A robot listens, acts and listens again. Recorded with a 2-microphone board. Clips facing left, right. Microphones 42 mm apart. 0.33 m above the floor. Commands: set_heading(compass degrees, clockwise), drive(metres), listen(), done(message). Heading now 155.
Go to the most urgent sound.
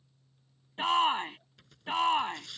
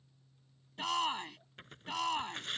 set_heading(125)
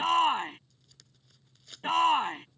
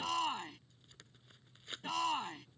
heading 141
set_heading(6)
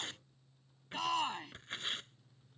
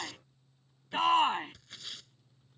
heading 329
set_heading(9)
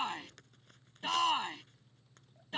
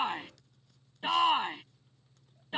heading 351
set_heading(11)
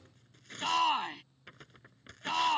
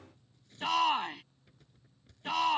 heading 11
drive(1.0)
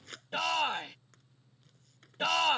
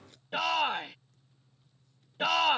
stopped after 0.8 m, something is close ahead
set_heading(21)
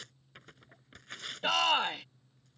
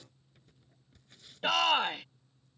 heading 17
done("I am next to the shout.")